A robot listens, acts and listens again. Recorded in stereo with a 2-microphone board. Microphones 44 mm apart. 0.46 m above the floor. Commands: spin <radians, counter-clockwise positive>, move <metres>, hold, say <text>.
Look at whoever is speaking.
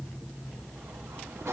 hold
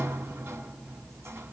hold
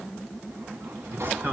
spin -0.87
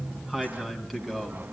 say Facing the man speaking, 2 to 4 m away.